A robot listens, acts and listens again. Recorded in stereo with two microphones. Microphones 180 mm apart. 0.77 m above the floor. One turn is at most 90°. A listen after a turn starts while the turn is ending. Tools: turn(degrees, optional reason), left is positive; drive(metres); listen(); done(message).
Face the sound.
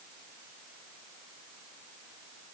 listen()
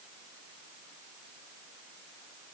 listen()
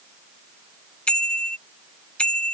turn(degrees=30)
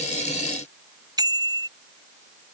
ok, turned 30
turn(degrees=-20, reason="So it is at 20° right.")
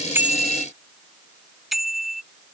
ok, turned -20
done("Found it: a bicycle bell, straight ahead.")